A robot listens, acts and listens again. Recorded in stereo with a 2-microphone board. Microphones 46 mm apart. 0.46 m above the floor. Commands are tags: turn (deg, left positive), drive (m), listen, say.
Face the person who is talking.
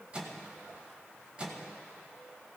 <listen/>
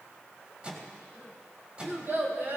<turn deg="-55"/>
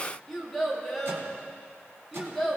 <say>Facing the child speaking.</say>